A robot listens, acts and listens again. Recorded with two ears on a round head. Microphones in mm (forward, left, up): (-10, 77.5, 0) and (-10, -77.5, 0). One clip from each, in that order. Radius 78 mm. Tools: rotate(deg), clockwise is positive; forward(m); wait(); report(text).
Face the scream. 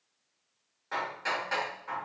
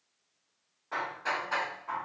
wait()
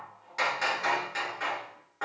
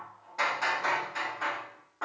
wait()
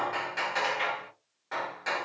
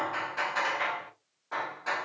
report("I can't make out a scream, only hammering.")